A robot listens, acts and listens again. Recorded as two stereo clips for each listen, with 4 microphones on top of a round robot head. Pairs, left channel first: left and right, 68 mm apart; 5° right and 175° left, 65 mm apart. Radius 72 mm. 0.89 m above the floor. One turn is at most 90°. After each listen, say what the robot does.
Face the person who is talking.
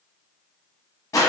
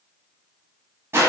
Keep listening.
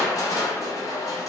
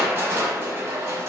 Keep listening.
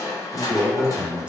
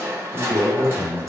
Turn 90° right.
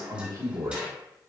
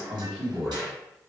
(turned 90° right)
Turn 90° right.
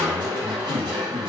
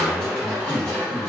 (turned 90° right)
Turn 10° right.
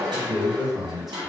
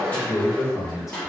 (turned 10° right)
Facing the man speaking.